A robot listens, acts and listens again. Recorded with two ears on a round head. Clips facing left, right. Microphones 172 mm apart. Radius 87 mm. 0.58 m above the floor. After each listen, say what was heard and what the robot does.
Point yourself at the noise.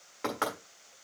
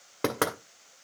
The knocking: about 60° right or 120° right. Turn 60° right.
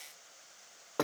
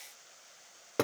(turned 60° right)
So it is at 25° right. Turn 25° right.
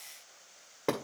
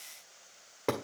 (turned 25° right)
Found it: knocking, straight ahead, 1 to 2 m away.